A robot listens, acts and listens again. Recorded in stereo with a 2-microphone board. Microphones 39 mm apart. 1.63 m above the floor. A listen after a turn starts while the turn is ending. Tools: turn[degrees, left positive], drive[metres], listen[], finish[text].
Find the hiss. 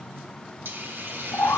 Thought: The hiss: about 65° right or 115° right.
Action: turn[-65]
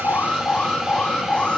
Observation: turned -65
Action: listen[]
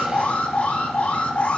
Action: listen[]
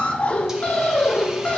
Action: finish[I heard a hiss, but can't make it out now. It was about straight ahead or 50° right.]